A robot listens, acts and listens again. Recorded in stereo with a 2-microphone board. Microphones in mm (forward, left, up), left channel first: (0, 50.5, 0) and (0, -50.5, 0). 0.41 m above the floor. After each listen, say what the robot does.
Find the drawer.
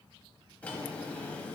Turn 30° left.
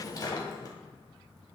Turn 140° left.
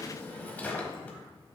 Turn 20° left.
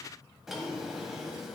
Found it: a drawer, straight ahead, 1 to 2 m away.